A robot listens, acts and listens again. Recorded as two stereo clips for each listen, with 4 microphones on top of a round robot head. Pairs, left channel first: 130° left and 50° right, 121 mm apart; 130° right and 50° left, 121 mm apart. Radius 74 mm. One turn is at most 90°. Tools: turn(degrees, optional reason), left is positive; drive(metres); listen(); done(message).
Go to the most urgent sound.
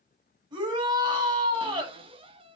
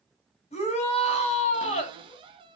turn(degrees=-90, reason="The shout: 105° right.")
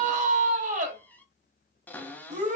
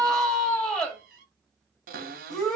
turn(degrees=-45, reason="The shout is now 45° right.")
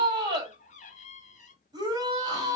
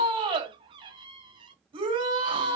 drive(metres=1.0)
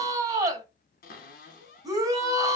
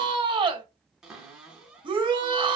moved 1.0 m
drive(metres=1.0)
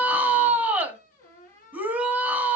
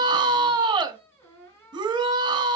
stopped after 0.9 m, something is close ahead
turn(degrees=20, reason="The shout is now 20° left.")
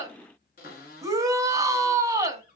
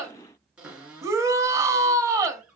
done("Arrived at the shout, straight ahead.")